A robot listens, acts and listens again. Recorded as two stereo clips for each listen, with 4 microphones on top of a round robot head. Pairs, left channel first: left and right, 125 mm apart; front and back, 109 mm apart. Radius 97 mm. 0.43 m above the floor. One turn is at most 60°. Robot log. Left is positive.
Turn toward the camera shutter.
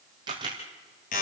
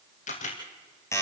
note: The camera shutter: 25° right.
cmd yaw -25
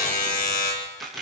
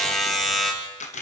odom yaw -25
end: Found it: a camera shutter, straight ahead, 2 to 4 m away.